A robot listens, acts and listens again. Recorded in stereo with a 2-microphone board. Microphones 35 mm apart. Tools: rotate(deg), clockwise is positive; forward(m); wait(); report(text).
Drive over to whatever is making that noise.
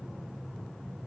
wait()
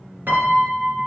rotate(75)
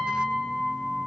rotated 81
forward(1.0)
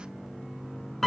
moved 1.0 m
rotate(-10)
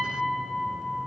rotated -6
forward(1.0)
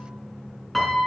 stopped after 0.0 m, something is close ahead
report("Blocked. The piano is further on, straight ahead.")